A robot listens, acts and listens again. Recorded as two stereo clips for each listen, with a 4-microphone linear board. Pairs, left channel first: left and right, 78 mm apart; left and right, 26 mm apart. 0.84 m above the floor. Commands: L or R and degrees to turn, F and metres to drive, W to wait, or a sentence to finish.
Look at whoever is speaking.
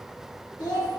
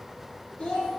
L90
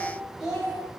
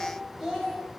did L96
R10
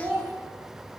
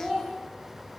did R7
R10
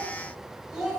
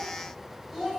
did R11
Found it: a child speaking, straight ahead, 2 to 4 m away.